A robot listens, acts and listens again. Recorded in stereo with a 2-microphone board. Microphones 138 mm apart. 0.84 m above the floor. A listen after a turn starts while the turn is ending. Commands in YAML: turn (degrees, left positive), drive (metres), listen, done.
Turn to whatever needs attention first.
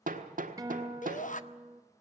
turn: 65
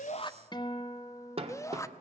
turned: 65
turn: 25
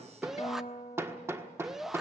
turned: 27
done: "Found it: a shout, straight ahead, under 1 m away."